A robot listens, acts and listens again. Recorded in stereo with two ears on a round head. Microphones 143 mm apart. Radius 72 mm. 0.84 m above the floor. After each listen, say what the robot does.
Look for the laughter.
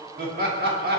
Turn 65° right.
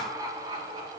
Turn 30° right.
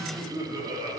Turn 25° right.
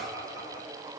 Turn 25° right.
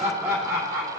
Turn 20° right.
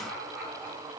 Found it: laughter, straight ahead, 2 to 4 m away.